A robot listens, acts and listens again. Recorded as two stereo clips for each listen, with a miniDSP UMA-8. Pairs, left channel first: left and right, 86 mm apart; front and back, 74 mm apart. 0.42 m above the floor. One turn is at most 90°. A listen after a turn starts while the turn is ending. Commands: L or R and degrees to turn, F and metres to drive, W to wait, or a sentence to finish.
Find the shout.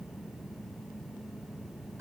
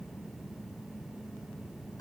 W
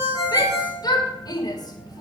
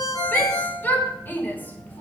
L65
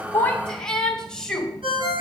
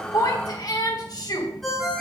L10
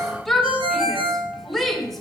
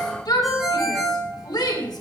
Facing the shout, 2 to 4 m away.